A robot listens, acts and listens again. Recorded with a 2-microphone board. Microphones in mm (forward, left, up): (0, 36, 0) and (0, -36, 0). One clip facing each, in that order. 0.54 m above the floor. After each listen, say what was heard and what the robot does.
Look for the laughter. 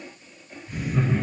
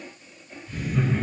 The laughter: about 20° left or 160° left. Turn 20° left.
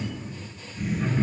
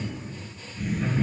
Turn 30° left.
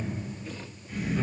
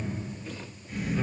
So it is at 15° right. Turn 15° right.
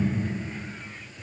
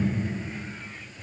Found it: laughter, straight ahead.